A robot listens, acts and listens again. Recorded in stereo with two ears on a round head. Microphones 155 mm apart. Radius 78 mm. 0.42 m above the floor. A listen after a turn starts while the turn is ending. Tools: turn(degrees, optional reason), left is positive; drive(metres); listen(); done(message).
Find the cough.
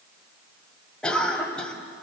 turn(degrees=30)
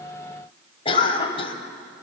turn(degrees=140, reason="So it is at 140° left.")
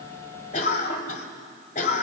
turn(degrees=50, reason="The cough is now 50° left.")
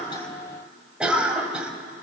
turn(degrees=-10, reason="The cough is now 10° right.")
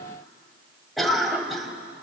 done("Facing the cough.")